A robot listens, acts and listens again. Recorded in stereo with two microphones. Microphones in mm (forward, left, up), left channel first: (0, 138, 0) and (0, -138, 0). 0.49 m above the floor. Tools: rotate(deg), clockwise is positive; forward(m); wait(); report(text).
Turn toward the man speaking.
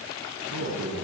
rotate(90)
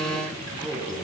report("Facing the man speaking, over 4 m away.")